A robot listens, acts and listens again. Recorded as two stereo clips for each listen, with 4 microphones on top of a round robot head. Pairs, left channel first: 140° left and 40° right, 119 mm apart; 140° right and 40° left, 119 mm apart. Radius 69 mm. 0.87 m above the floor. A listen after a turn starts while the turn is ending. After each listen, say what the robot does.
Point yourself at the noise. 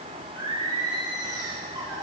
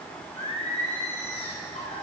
Turn 100° right.
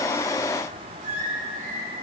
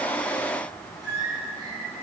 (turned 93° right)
Turn 20° right.
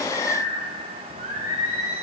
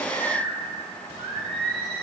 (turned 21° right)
Facing the singing.